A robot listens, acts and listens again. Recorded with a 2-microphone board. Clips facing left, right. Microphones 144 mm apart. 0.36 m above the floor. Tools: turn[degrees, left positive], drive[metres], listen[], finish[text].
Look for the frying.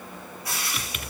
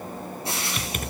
Thought: The frying: about 25° right or 155° right.
Action: turn[-25]
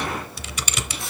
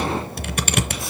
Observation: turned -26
Action: listen[]
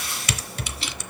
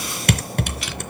Action: finish[Found it: frying, straight ahead, over 4 m away.]